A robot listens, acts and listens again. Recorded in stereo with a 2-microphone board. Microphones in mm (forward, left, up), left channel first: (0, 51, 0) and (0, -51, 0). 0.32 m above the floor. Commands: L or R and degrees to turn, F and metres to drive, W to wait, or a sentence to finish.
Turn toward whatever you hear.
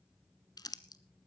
L40
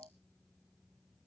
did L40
W
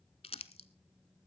L105
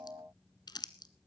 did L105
L45
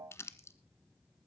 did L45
L25
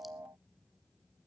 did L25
W
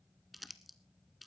Found it: crumpling, straight ahead.